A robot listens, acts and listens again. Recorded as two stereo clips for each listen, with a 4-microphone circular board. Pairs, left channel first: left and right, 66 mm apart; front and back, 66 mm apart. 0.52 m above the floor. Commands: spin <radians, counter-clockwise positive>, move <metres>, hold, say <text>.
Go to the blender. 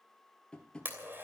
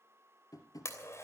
spin -0.61
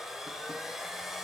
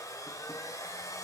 move 1.0
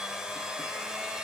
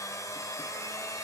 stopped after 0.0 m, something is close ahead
spin -0.17
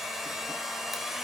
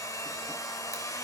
say Something is in my way. I am facing the blender but have not reached it.